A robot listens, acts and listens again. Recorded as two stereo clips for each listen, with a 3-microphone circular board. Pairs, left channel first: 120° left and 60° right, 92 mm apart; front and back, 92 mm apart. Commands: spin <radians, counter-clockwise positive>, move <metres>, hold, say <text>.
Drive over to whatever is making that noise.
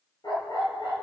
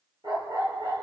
spin 2.62
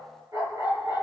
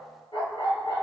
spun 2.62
spin -0.17
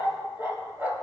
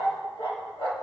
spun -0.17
move 1.0
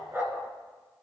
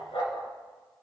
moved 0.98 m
move 1.0
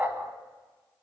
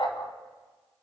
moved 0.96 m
move 1.0
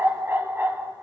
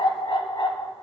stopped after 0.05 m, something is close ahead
say I am next to the dog barking.